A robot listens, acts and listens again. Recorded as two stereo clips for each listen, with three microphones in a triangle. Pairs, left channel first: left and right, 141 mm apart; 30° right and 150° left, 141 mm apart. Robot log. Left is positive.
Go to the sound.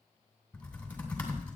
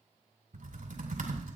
note: The typing on a keyboard: 170° left.
cmd yaw +170
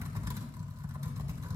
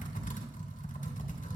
note: The typing on a keyboard is now 25° right.
cmd yaw -25
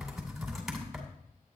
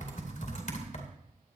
cmd fwd 1.0
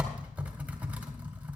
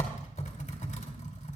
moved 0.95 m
note: The typing on a keyboard is now 10° right.
cmd yaw -10
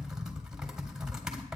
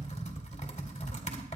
cmd fwd 1.0
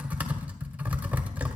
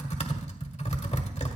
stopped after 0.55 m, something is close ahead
note: The typing on a keyboard is now 15° right.
cmd yaw -15
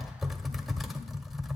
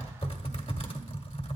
end: I am next to the typing on a keyboard.